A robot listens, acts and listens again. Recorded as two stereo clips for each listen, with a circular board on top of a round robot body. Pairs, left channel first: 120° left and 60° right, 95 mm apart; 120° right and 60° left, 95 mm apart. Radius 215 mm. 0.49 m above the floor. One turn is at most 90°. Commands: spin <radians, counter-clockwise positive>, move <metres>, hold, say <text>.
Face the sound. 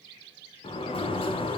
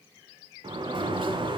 spin 1.57
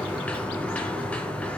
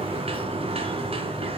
spin 0.79
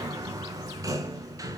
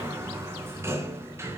say Facing the sliding door.